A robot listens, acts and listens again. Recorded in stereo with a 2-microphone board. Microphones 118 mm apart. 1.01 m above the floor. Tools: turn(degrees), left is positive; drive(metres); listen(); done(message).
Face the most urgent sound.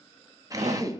turn(degrees=-75)
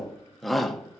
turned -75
done("Facing the shout, 1 to 2 m away.")